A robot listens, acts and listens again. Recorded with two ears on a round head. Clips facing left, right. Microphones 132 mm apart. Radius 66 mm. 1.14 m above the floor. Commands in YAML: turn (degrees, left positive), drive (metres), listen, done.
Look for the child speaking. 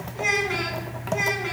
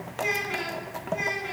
turn: 70
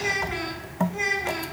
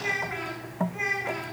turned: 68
turn: 40
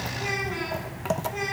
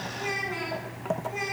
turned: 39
done: "Facing the child speaking, over 4 m away."